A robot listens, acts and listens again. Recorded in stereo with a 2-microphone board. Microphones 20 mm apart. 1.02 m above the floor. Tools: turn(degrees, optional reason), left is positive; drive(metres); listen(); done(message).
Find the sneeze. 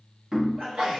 turn(degrees=-75, reason="The sneeze: about 75° right or 105° right.")
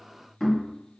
listen()
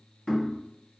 done("I heard a sneeze, but can't make it out now. It was about straight ahead or 30° right.")